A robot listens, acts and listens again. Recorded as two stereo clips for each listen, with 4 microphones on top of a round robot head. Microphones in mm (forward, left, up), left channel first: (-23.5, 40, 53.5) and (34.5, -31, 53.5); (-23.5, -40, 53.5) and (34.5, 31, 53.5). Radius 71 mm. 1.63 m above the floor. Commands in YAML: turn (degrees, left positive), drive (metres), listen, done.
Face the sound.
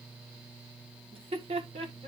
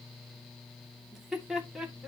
turn: -35
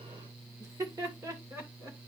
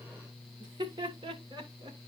turn: 10
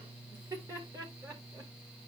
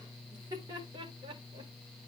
done: "Facing the laughter, 2 to 4 m away."